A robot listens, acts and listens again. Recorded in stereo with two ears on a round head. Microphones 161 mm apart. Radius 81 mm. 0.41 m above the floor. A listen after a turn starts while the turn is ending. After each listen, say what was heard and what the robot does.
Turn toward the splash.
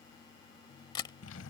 Keep listening.
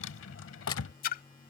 The splash: about 50° left or 130° left. Turn 50° left.
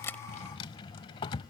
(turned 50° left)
Keep listening.
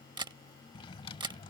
I heard a splash, but can't make it out now. It was about straight ahead or 80° left.